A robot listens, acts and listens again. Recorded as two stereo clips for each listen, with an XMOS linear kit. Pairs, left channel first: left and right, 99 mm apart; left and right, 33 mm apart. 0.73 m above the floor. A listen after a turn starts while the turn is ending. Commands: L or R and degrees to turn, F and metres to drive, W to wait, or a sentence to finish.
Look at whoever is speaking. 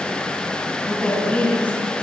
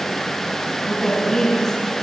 L15
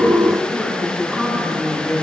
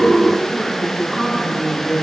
L30
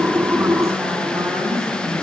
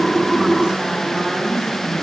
R30
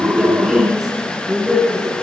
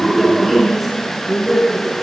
Found it: a woman speaking, straight ahead.